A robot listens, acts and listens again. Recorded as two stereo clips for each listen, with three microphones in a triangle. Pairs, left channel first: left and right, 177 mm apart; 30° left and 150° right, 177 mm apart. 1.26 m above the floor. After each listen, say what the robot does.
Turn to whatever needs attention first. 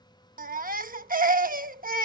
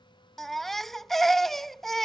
Turn 60° right.
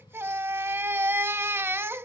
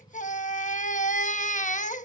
Turn 15° right.
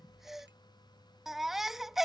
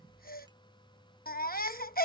Facing the baby crying.